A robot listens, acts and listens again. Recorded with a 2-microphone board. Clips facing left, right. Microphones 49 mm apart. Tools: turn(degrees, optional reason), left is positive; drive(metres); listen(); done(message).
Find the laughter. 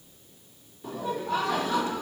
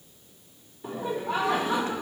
turn(degrees=-15, reason="The laughter: about 15° right or 165° right.")
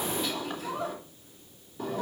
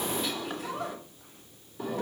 done("Found it: laughter, straight ahead, 2 to 4 m away.")